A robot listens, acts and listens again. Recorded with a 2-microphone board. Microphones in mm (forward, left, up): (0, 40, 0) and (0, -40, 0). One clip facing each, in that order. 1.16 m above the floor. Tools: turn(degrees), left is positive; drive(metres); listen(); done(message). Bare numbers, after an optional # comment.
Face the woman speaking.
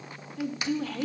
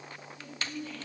turn(90)
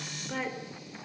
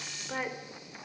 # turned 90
# So it is at 15° right.
turn(-15)
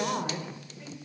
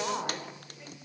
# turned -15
done("Facing the woman speaking.")